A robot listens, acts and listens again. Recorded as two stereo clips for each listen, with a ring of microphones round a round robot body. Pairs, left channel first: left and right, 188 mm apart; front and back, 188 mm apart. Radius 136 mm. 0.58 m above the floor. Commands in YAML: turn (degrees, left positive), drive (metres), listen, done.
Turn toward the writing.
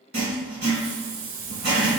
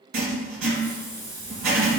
turn: -145
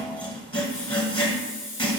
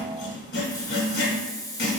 turn: 25
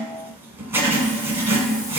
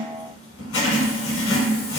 turn: -10
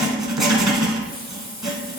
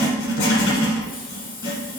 done: "Found it: writing, straight ahead, 1 to 2 m away."